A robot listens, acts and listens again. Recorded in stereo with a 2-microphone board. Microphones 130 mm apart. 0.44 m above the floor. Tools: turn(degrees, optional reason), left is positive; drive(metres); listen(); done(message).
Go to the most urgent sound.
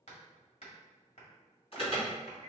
turn(degrees=50, reason="The alarm: about 50° left or 130° left.")
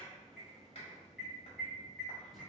drive(metres=1.0)
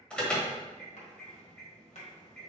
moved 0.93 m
turn(degrees=10, reason="The alarm is now 10° left.")
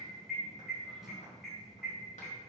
drive(metres=1.0)
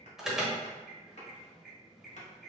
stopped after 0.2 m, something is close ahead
done("I am next to the alarm.")